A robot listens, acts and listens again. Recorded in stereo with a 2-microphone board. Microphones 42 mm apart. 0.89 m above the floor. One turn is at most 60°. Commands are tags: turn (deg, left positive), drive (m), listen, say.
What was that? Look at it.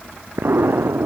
<turn deg="-60"/>
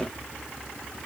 <listen/>
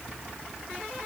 <say>I heard an explosion, but can't make it out now. It was about straight ahead or 60° right.</say>